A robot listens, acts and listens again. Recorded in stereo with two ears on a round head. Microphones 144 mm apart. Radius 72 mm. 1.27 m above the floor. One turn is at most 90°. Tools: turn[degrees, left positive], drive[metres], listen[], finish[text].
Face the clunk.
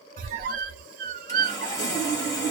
Action: listen[]
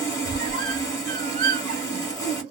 Action: listen[]
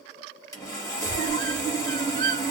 Action: finish[I can't make out a clunk to turn to.]